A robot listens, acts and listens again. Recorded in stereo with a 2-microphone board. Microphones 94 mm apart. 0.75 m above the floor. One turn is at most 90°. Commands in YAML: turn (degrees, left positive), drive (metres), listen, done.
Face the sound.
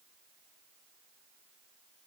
listen: true
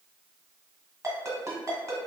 turn: -30
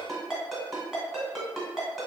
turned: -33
done: "Found it: a ringtone, straight ahead."